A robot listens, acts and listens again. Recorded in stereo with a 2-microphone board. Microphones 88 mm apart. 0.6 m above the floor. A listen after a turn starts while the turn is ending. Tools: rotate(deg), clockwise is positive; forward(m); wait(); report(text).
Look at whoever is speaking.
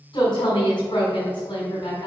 rotate(-65)
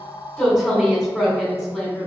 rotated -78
report("Facing the woman speaking.")